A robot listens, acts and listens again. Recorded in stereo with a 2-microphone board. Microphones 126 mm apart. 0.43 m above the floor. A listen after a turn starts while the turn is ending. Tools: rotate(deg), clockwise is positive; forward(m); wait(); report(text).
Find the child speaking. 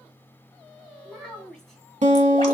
rotate(-30)
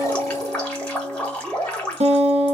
wait()
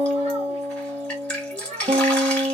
rotate(65)
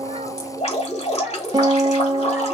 wait()
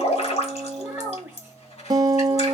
rotate(10)
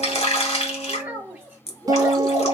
rotate(10)
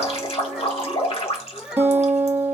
report("Found it: a child speaking, straight ahead.")